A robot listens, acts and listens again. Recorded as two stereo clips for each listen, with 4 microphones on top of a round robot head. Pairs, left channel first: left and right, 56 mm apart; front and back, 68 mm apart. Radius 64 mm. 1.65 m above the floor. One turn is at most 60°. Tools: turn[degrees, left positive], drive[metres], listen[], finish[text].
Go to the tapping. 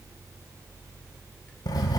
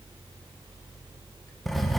Action: listen[]
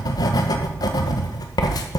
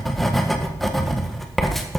Action: listen[]
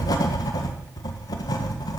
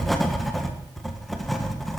Action: finish[I can't make out tapping to turn to.]